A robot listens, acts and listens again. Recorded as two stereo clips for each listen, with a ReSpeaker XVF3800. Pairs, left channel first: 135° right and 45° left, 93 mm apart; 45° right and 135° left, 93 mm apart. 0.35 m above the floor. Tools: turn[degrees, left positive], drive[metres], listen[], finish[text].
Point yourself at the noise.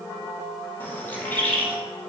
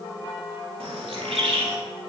Thought: The bird: 155° left.
Action: turn[155]
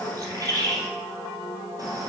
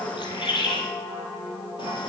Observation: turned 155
Thought: The bird is now 10° right.
Action: turn[-10]
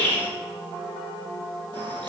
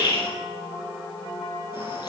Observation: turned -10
Action: finish[Found it: a bird, straight ahead, 2 to 4 m away.]